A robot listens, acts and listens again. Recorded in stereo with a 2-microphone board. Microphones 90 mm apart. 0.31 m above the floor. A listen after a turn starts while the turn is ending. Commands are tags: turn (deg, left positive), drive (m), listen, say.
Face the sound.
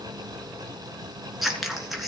<turn deg="30"/>
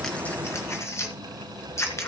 <turn deg="150"/>
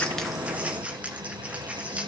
<turn deg="-15"/>
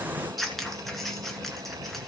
<say>Facing the scissors, 1 to 2 m away.</say>